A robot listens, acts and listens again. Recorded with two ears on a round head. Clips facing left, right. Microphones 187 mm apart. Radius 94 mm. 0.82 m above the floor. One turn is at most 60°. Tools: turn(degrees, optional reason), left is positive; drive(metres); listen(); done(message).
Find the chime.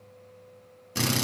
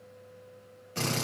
listen()
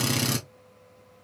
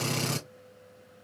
listen()
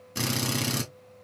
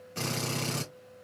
done("I can't make out a chime to turn to.")